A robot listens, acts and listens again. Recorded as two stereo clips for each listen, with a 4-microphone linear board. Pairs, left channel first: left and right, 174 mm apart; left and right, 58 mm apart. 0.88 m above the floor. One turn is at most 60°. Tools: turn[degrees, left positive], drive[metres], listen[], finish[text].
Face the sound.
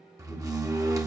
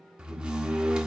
Thought: The door slam: about 20° right or 160° right.
Action: turn[-20]
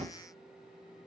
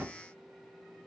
Thought: So it is at 140° right.
Action: turn[-60]
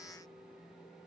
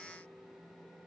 Thought: Nothing new. It was at 80° right.
Action: turn[-60]
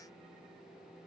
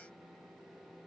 Thought: Nothing new. It was at 20° right.
Action: turn[-20]
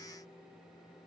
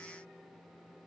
Action: finish[Facing where the door slam came from. I can't hear it now.]